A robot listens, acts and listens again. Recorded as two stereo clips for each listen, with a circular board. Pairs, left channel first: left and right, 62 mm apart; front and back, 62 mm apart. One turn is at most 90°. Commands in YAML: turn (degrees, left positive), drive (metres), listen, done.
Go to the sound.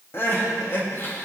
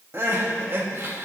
turn: 90
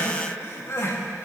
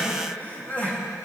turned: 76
turn: 60
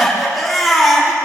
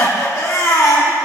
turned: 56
drive: 1.0
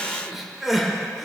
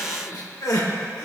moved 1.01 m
drive: 1.0
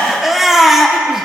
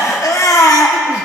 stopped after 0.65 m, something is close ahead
done: "I am next to the crying."